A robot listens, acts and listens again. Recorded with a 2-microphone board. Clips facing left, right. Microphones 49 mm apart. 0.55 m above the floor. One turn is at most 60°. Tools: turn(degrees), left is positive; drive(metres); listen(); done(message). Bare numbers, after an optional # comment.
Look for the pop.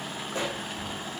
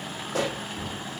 # The pop: about 70° right or 110° right.
turn(-60)
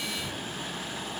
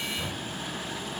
listen()
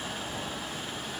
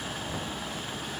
done("I heard a pop, but can't make it out now. It was about 10° right or 50° right.")